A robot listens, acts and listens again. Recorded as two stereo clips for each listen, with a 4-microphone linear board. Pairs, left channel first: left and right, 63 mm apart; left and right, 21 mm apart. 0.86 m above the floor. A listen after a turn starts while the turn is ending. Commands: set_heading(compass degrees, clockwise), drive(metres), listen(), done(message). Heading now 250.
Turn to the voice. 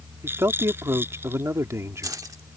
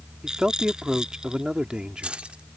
set_heading(300)
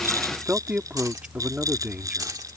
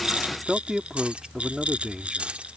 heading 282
set_heading(302)
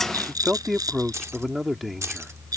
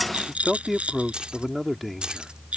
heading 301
done("Found it: a man speaking, straight ahead.")